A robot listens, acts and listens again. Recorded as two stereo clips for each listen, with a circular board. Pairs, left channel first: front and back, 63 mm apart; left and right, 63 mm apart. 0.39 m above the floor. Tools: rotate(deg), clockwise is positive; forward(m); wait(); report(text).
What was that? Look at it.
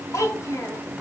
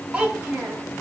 rotate(25)
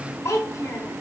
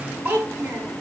rotate(30)
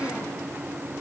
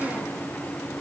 wait()
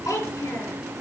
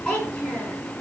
rotate(-10)
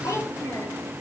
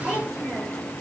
report("Found it: a child speaking, straight ahead, over 4 m away.")